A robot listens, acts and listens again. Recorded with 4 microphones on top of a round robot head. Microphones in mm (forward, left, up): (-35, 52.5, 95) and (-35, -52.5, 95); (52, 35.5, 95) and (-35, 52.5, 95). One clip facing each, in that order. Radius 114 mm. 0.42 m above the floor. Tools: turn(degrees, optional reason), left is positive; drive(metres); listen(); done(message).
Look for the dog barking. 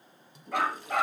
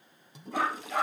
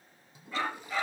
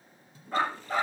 turn(degrees=125, reason="The dog barking: 125° left.")
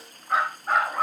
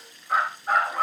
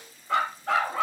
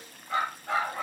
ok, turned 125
done("Facing the dog barking.")